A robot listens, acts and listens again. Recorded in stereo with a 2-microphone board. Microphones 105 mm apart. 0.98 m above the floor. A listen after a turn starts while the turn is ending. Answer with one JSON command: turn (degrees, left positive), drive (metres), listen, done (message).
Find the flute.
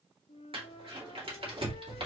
{"turn": 75}
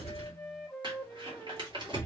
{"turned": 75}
{"done": "Facing the flute, under 1 m away."}